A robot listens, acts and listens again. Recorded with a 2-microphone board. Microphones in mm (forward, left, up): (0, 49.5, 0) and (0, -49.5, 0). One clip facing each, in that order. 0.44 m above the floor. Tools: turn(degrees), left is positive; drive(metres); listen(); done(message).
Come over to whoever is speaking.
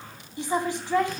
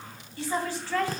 turn(degrees=15)
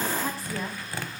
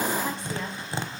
listen()
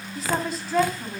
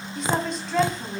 drive(metres=1.0)
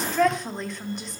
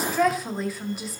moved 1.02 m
drive(metres=1.0)
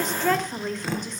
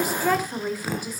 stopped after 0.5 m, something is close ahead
turn(degrees=-10)
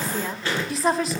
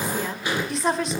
done("I am next to the woman speaking.")